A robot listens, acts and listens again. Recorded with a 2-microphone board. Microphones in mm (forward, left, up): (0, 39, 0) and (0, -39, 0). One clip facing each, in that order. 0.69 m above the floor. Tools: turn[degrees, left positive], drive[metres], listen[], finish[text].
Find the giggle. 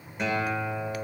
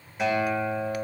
Action: listen[]
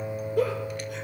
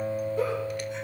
Thought: The giggle: about 70° left or 110° left.
Action: turn[70]
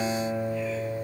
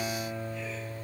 Action: listen[]
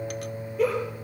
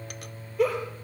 Action: finish[Facing the giggle.]